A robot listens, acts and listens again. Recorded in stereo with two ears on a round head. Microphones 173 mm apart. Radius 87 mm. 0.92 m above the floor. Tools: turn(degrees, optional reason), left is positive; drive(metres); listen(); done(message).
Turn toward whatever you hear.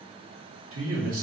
turn(degrees=-90)
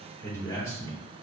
turn(degrees=15, reason="So it is at 15° left.")
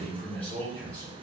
turn(degrees=10, reason="The man speaking is now 10° left.")
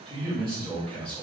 done("Found it: a man speaking, straight ahead, 2 to 4 m away.")